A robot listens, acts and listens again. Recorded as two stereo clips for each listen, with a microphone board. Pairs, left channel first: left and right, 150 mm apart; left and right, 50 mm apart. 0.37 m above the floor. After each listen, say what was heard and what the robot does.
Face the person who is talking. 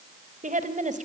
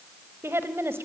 The woman speaking: about 60° right or 120° right. Turn 60° right.
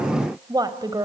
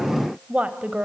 So it is at 30° right. Turn 30° right.
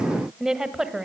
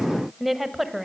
Found it: a woman speaking, straight ahead, 1 to 2 m away.